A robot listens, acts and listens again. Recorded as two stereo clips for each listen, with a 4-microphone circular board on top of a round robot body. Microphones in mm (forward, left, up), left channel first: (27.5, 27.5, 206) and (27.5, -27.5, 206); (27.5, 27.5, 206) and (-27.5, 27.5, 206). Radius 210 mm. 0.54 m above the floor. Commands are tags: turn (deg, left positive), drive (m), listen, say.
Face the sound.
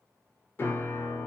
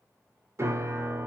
<turn deg="140"/>
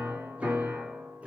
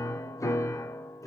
<turn deg="-20"/>
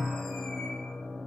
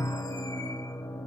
<say>Found it: a piano, straight ahead.</say>